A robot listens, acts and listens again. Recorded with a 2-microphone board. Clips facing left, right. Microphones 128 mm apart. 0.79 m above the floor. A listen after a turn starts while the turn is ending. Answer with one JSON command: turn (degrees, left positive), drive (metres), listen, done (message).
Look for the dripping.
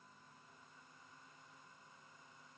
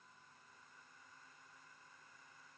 {"listen": true}
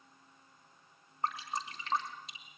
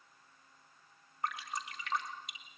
{"turn": 30}
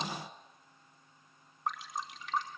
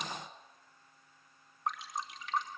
{"done": "Facing the dripping."}